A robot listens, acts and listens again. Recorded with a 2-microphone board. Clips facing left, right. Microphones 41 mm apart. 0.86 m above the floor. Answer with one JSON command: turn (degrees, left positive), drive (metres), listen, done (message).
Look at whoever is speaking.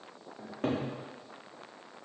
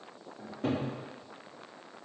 {"listen": true}
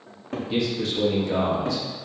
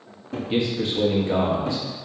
{"turn": -30}
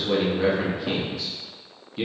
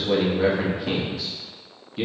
{"done": "Found it: a man speaking, straight ahead, under 1 m away."}